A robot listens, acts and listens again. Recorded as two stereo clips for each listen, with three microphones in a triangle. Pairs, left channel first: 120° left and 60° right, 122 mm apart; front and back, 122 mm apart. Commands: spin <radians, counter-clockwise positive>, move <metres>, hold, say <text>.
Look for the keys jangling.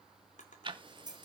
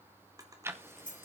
say Found it: keys jangling, straight ahead.